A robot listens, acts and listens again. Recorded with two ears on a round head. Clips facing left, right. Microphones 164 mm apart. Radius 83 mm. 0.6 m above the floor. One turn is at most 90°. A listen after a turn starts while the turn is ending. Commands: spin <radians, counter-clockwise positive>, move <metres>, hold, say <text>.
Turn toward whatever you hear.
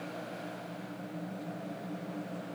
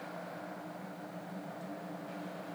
hold
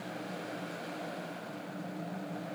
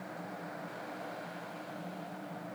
hold
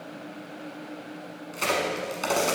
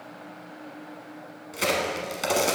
spin -0.52
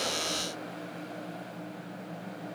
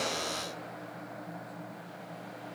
hold
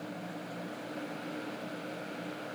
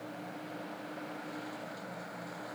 say I heard a crack, but can't make it out now. It was about 20° left or 140° right.